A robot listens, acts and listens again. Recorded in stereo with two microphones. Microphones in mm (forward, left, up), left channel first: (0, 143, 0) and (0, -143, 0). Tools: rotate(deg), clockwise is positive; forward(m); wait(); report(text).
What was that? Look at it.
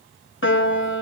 rotate(-45)
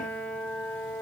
report("Facing the piano, under 1 m away.")